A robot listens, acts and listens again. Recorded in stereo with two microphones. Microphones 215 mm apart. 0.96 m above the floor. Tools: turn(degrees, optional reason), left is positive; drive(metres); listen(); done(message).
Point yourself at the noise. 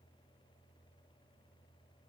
listen()
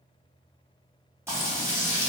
turn(degrees=-30)
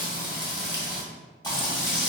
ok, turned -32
turn(degrees=20, reason="So it is at 20° left.")
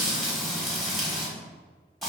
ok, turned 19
done("Found it: frying, straight ahead.")